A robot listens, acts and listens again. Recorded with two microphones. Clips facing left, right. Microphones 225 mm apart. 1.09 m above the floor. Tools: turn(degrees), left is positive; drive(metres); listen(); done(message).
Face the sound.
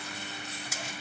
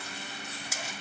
listen()
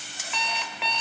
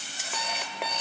turn(degrees=-50)
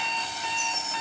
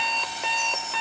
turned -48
turn(degrees=-85)
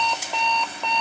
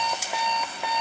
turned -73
turn(degrees=-10)
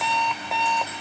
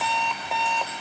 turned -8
done("Found it: an alarm clock, straight ahead.")